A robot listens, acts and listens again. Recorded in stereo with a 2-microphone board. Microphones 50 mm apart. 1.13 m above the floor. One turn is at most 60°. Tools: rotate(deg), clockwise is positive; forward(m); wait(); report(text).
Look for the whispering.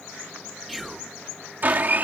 rotate(-30)
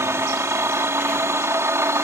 wait()
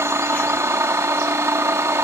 wait()
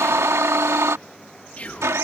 rotate(-60)
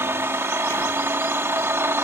rotate(-60)
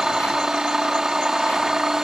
rotate(-30)
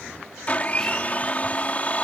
report("I heard whispering from this way, but can't make it out now.")